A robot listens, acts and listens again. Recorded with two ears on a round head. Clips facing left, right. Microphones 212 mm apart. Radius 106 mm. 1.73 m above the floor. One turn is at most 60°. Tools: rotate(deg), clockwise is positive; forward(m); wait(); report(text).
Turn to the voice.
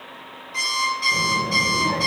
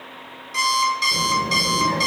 rotate(15)
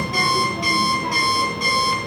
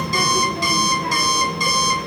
rotate(60)
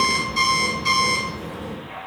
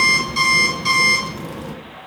rotate(60)
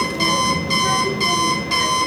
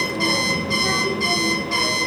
rotate(-15)
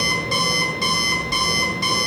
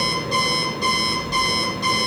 report("Facing the child speaking.")